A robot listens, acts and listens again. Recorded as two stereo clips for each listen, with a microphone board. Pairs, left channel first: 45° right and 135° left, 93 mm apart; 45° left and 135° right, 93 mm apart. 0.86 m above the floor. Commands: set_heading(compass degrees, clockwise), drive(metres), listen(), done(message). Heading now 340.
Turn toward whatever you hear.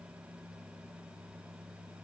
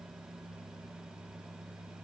listen()
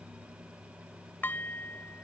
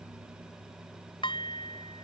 set_heading(315)
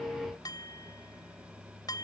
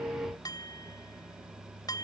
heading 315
done("Found it: dishes clattering, straight ahead.")